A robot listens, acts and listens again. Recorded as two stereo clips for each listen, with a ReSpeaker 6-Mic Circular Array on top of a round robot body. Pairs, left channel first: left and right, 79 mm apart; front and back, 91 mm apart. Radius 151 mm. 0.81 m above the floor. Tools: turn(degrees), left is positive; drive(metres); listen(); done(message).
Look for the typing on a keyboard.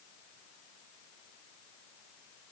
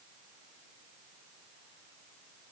listen()
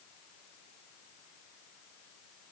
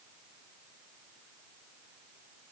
listen()
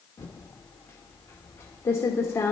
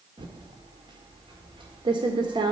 turn(degrees=150)
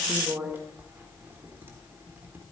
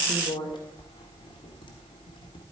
turn(degrees=-25)
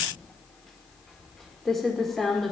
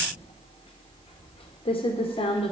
done("Found it: typing on a keyboard, straight ahead.")